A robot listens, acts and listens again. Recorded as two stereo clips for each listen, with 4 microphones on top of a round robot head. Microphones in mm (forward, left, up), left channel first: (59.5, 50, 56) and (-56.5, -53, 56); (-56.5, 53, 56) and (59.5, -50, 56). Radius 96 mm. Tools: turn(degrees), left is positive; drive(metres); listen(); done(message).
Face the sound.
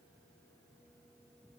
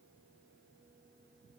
listen()
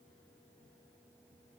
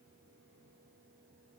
listen()
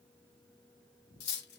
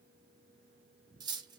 turn(degrees=25)
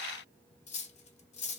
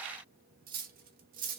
done("Found it: cutlery clinking, straight ahead, under 1 m away.")